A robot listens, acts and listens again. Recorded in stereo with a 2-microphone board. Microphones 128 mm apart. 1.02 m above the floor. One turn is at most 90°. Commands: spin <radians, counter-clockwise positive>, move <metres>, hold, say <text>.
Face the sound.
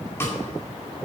hold
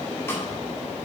hold
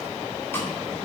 spin 0.35
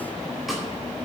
hold
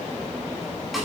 say Found it: a snare drum, straight ahead, 2 to 4 m away.